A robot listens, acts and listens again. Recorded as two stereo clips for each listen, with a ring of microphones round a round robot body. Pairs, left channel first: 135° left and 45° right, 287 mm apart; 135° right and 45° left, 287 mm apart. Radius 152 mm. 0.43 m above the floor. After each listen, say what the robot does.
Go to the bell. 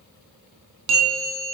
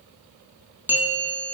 Turn 40° right.
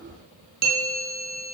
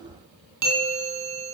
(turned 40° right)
Turn 15° left.
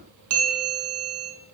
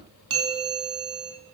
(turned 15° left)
Drive 1.0 m forward.
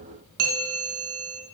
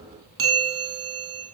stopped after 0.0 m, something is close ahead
Blocked. The bell is further on, straight ahead.